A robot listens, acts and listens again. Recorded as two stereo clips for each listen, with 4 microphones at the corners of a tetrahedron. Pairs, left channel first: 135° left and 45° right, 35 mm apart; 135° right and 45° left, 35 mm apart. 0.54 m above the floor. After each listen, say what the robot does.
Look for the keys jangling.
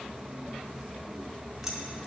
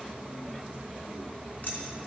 Keep listening.
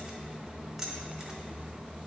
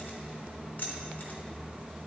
Turn 120° right.
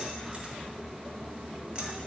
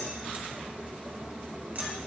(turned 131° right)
Turn 10° left.
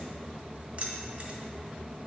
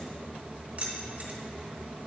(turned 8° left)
Facing the keys jangling, 1 to 2 m away.